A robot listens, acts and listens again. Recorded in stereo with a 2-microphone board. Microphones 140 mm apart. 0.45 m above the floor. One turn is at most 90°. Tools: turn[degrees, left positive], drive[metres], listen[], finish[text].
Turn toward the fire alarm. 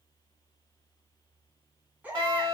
Thought: The fire alarm: about 45° right or 135° right.
Action: turn[-45]
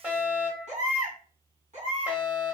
Thought: So it is at 10° right.
Action: turn[-10]
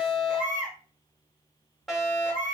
Action: finish[Facing the fire alarm.]